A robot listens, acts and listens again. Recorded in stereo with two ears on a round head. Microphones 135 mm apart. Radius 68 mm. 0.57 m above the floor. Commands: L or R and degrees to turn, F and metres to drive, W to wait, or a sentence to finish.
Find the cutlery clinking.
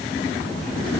W
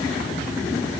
W
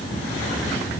I can't make out cutlery clinking.